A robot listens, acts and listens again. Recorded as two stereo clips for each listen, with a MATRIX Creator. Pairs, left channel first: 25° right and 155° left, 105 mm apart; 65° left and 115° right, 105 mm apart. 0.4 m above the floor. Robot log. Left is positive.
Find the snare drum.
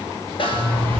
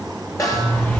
note: The snare drum: 15° left.
cmd yaw +15
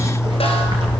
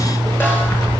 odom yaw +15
cmd idle
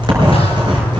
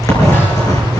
cmd idle
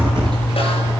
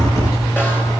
end: I heard a snare drum from this way, but can't make it out now.